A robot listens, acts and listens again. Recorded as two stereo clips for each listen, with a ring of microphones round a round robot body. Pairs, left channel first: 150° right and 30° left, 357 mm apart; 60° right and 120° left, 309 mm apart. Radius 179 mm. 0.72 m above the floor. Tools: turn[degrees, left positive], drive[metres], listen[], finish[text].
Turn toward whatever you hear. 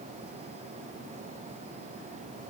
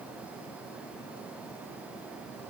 Action: listen[]
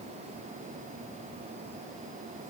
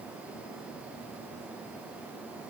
Action: listen[]
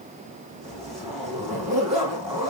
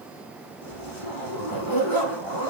Thought: The zipper: 60° right.
Action: turn[-60]
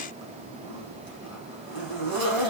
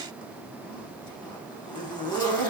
Thought: The zipper is now 20° left.
Action: turn[20]
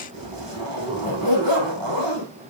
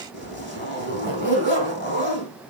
Action: finish[Facing the zipper, over 4 m away.]